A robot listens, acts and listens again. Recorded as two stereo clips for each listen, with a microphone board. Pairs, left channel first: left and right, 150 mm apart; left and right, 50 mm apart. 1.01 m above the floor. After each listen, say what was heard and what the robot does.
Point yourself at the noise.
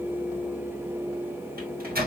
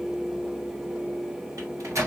Turn 90° right.
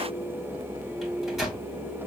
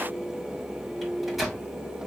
Found it: a microwave, straight ahead.